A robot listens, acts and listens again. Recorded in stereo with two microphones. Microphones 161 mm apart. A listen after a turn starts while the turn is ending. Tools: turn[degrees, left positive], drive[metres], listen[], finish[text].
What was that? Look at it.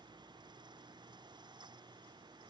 Action: listen[]
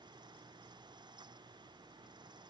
Action: listen[]
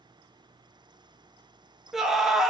Action: turn[30]
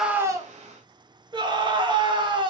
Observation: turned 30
Thought: So it is at 35° right.
Action: turn[-35]
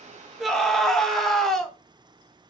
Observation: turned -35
Action: finish[Found it: a scream, straight ahead, under 1 m away.]